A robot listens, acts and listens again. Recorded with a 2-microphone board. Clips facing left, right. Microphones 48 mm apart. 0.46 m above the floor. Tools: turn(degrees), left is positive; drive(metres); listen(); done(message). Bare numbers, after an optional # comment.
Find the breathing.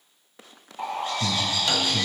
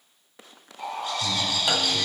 # The breathing: about 70° left or 110° left.
turn(70)
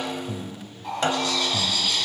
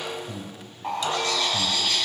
# So it is at 10° left.
turn(10)
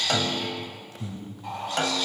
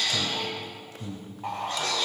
done("Found it: breathing, straight ahead, 1 to 2 m away.")